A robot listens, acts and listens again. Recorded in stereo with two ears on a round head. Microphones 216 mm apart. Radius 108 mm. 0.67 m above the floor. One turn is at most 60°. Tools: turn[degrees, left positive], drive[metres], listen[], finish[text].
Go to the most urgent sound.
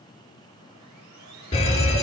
Thought: The fire alarm: about 25° left or 155° left.
Action: turn[25]
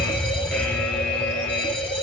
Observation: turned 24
Action: drive[1.0]
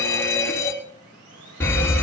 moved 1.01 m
Thought: The fire alarm is now 15° left.
Action: turn[15]
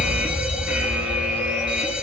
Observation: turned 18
Action: drive[1.0]
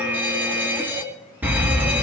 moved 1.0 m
Thought: The fire alarm is now 10° right.
Action: turn[-10]
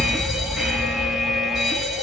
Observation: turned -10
Action: drive[1.0]
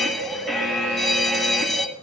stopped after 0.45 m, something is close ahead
Action: finish[Arrived at the fire alarm, straight ahead.]